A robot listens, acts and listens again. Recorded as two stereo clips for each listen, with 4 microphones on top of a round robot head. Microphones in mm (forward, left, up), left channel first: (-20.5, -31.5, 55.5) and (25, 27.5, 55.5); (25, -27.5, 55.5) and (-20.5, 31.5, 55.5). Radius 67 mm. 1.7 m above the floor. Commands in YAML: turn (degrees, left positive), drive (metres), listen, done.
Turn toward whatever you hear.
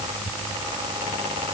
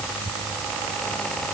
listen: true
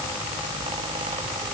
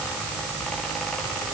listen: true
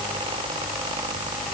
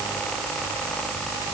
done: "I can't make out anything."